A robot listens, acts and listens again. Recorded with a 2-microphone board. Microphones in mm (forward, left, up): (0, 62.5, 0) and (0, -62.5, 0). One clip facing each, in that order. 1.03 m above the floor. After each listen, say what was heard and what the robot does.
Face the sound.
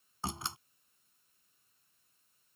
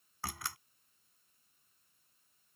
The door slam: about 25° left or 155° left. Turn 25° left.
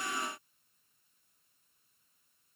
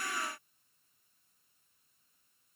Keep listening.
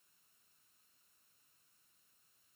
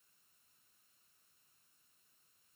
I heard a door slam, but can't make it out now. It was about straight ahead or 130° left.